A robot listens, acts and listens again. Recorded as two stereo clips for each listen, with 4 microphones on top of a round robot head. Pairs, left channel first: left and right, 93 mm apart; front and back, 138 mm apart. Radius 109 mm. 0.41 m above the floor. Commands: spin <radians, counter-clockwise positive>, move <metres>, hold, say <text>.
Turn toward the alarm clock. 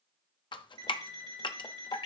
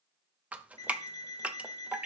spin -1.13
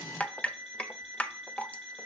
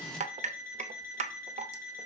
say Found it: an alarm clock, straight ahead.